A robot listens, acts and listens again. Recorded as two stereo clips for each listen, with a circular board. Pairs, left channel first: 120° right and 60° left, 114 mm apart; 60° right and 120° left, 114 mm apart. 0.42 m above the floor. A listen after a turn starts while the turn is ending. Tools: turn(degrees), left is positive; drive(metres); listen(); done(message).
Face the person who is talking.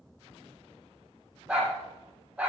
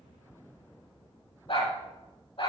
listen()
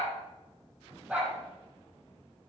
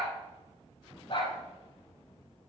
listen()
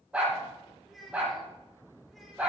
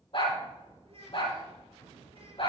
turn(degrees=150)
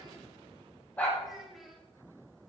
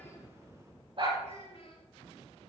turn(degrees=-30)
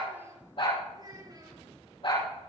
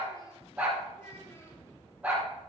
done("Found it: a child speaking, straight ahead, over 4 m away.")